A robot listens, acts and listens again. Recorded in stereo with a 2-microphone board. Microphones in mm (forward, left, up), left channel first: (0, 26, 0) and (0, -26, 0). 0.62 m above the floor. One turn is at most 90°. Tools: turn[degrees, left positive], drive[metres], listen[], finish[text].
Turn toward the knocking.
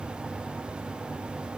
Action: listen[]
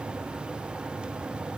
Action: listen[]
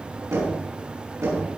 Action: turn[-90]
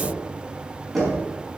Action: finish[Facing the knocking.]